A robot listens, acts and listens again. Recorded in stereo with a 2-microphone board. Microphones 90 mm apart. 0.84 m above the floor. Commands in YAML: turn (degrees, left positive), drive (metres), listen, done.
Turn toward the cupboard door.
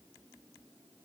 listen: true
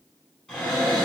turn: 30
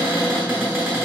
turn: -25
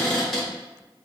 done: "Facing the cupboard door."